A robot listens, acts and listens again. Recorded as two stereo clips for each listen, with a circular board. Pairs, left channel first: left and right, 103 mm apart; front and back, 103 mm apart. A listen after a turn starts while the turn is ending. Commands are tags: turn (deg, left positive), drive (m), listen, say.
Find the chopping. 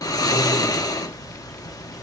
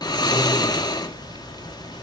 <listen/>
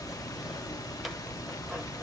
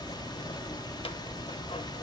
<listen/>
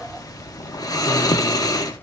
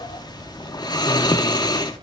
<say>I can't make out chopping to turn to.</say>